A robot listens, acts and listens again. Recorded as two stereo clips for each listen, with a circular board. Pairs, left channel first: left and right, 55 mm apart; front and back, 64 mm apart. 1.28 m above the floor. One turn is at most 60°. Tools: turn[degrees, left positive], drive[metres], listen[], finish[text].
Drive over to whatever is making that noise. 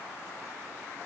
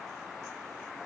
Action: listen[]
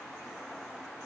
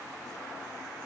Action: listen[]
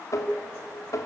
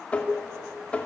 Thought: The tapping: 70° left.
Action: turn[60]
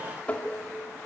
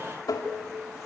Thought: The tapping is now 25° left.
Action: turn[25]
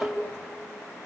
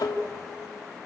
Action: drive[1.0]
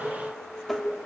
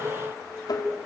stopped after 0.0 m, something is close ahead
Action: finish[Something is in my way. I am facing the tapping but have not reached it.]